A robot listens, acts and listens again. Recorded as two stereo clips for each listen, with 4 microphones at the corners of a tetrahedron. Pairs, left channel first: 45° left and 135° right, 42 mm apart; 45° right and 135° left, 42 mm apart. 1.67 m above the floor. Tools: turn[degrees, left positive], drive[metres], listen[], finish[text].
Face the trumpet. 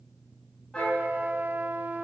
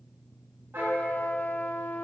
Thought: The trumpet: 90° right.
Action: turn[-90]
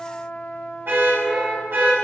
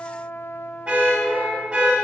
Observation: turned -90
Thought: The trumpet is now 10° right.
Action: turn[-10]
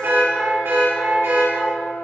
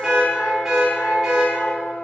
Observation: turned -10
Action: finish[Found it: a trumpet, straight ahead.]